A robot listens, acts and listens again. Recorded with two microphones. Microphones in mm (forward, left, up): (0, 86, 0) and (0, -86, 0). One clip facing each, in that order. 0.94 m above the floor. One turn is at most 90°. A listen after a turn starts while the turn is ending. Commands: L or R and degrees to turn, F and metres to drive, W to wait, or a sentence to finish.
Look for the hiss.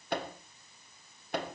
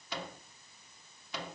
W
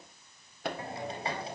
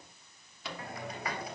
L30
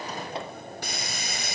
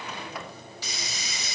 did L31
L90
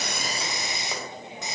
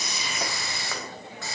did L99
L20
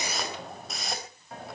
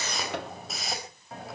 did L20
Facing the hiss, over 4 m away.